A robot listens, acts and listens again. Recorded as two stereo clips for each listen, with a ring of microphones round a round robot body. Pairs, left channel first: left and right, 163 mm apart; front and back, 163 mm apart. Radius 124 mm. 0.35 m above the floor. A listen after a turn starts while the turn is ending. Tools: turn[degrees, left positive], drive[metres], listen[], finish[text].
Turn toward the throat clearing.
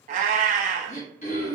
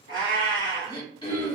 Thought: The throat clearing: 55° left.
Action: turn[55]
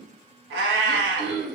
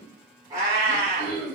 Action: finish[Facing the throat clearing.]